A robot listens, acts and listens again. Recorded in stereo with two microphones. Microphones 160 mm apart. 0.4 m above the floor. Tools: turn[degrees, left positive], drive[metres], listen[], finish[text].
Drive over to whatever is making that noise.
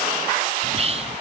Thought: The whispering: about 40° right or 140° right.
Action: turn[-40]
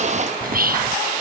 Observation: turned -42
Thought: So it is at 95° right.
Action: turn[-95]
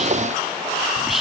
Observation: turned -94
Action: drive[1.0]
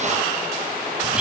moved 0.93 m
Thought: The whispering is now 10° right.
Action: turn[-10]
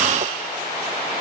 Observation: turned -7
Action: listen[]
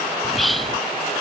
Action: drive[1.0]
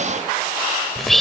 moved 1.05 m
Action: drive[1.0]
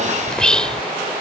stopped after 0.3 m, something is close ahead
Thought: The whispering is now 10° left.
Action: turn[10]
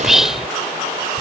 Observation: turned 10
Action: finish[Arrived at the whispering, straight ahead.]